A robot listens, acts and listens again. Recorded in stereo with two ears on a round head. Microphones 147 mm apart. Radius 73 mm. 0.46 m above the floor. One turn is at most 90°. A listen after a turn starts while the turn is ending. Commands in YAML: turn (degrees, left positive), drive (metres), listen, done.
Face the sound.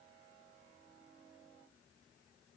listen: true
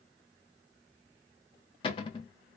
turn: 30
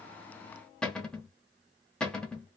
done: "Found it: a cupboard door, straight ahead."